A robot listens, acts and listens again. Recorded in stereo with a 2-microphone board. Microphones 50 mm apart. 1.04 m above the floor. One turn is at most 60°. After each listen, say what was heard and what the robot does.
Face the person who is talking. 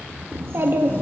The child speaking: about 55° right or 125° right. Turn 55° right.
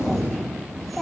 Facing the child speaking.